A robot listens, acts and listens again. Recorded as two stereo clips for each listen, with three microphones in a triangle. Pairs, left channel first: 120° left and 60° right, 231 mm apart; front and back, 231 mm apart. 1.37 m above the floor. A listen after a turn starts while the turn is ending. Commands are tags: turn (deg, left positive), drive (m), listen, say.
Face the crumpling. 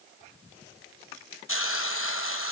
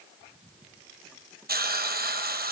<listen/>
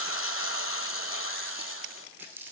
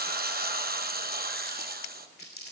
<turn deg="20"/>
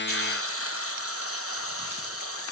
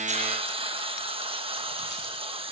<listen/>
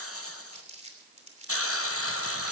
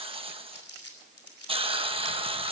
<say>Found it: crumpling, straight ahead, 2 to 4 m away.</say>